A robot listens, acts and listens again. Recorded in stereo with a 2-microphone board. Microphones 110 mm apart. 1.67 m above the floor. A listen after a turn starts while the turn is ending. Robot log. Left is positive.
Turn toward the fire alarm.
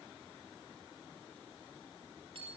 cmd idle
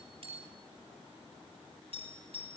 cmd idle
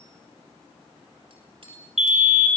note: The fire alarm: about 75° right or 105° right.
cmd yaw -75
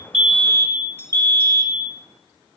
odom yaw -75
note: So it is at 30° right.
cmd yaw -30
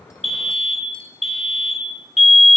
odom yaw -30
end: Facing the fire alarm.